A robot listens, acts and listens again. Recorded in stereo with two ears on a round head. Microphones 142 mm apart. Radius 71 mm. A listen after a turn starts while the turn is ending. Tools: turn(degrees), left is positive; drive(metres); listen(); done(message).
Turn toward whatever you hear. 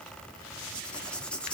turn(degrees=30)
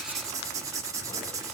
turn(degrees=-20)
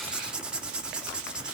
done("Facing the writing.")